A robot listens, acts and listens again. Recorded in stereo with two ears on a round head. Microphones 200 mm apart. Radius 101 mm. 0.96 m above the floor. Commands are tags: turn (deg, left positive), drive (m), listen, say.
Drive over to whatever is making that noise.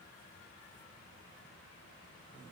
<listen/>
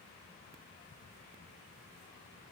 <listen/>
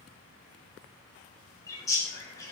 <turn deg="15"/>
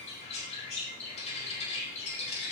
<turn deg="150"/>
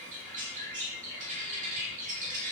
<turn deg="-35"/>
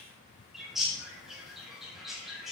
<drive m="1.0"/>
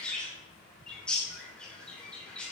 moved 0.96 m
<drive m="1.0"/>
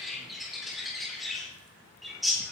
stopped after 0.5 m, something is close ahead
<say>Something is in my way. I am facing the bird but have not reached it.</say>